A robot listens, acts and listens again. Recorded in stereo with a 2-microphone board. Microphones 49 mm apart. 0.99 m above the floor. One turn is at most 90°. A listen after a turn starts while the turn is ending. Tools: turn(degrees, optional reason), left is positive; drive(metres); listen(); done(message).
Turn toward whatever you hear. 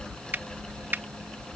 turn(degrees=-45, reason="The finger snap: about 45° right or 135° right.")
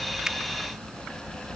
listen()
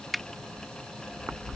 done("Found it: a finger snap, straight ahead.")